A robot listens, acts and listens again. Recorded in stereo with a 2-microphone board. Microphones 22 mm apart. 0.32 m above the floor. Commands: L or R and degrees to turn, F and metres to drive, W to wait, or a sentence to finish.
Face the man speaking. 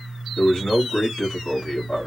L45
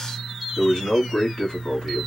L75
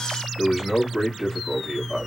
R20
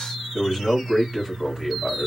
Facing the man speaking.